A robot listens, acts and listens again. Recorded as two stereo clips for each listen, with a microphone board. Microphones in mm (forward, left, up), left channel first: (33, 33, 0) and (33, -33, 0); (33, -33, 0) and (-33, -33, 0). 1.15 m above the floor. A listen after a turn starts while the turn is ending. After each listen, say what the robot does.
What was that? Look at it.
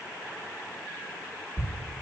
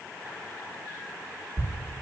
Turn 150° right.
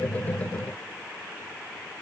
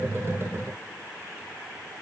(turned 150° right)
I heard a thud from this way, but can't make it out now.